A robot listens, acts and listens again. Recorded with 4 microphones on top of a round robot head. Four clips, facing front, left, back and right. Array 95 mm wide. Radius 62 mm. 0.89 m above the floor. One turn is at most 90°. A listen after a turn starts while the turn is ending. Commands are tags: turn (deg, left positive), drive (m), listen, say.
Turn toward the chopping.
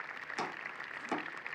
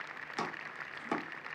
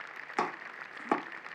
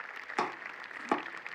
<turn deg="-90"/>
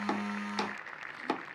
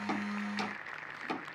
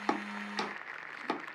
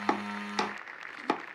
<turn deg="-90"/>
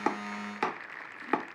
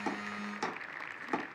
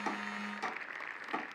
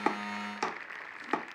<turn deg="-20"/>
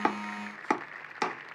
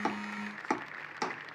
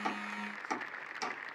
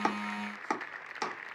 <say>Found it: chopping, straight ahead, under 1 m away.</say>